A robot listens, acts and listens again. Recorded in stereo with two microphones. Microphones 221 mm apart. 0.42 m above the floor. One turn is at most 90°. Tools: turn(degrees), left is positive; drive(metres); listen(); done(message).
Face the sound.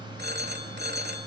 turn(degrees=-50)
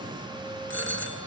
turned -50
turn(degrees=-75)
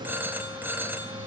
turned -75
turn(degrees=-10)
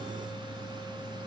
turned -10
listen()
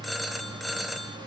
done("Facing the phone ringing, 1 to 2 m away.")